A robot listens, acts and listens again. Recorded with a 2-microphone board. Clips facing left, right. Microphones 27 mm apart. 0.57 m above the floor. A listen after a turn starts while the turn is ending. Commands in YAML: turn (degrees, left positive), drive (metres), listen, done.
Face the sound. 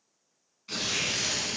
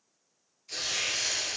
turn: 60
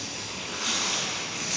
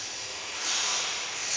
turn: 60
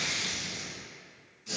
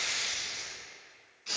turn: -35
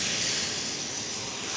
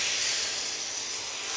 done: "Facing the tearing paper, 1 to 2 m away."